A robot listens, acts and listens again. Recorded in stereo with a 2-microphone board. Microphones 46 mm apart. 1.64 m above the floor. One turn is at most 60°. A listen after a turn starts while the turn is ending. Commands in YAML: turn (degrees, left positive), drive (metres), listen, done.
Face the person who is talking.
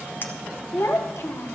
turn: 60
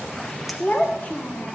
turn: 35
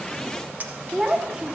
turn: -10
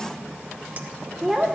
done: "Facing the child speaking, 1 to 2 m away."